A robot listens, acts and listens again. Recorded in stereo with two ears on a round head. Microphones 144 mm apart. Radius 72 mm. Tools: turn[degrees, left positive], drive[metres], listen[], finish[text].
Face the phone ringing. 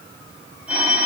Action: turn[-30]
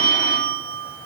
Thought: So it is at 25° left.
Action: turn[25]
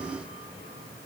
Action: listen[]
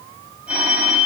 Action: finish[Facing the phone ringing, over 4 m away.]